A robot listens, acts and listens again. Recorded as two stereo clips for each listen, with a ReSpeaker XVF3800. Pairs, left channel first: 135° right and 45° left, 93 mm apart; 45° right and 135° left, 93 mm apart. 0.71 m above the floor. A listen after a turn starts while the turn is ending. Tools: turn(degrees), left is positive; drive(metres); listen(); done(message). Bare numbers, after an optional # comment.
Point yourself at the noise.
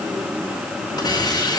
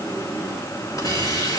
# The hiss: 90° right.
turn(-90)
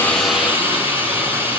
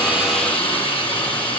# The hiss is now 20° right.
turn(-20)
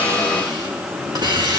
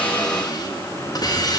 done("Found it: a hiss, straight ahead.")